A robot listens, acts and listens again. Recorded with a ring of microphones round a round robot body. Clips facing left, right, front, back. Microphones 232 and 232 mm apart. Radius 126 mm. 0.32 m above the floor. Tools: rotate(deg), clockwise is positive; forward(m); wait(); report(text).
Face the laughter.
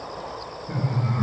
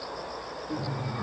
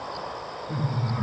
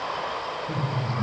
rotate(-140)
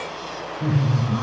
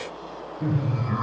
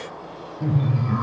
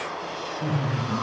rotate(40)
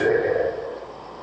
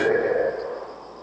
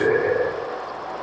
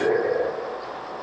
rotate(10)
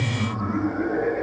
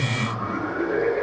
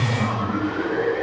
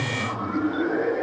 rotate(40)
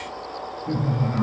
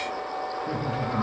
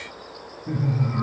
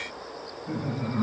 report("Found it: laughter, straight ahead, 1 to 2 m away.")